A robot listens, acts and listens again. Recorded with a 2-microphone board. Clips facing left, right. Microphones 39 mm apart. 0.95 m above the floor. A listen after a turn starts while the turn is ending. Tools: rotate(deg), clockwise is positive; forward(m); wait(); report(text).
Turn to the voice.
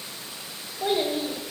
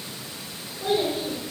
rotate(-60)
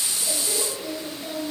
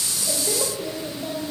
report("Found it: a child speaking, straight ahead.")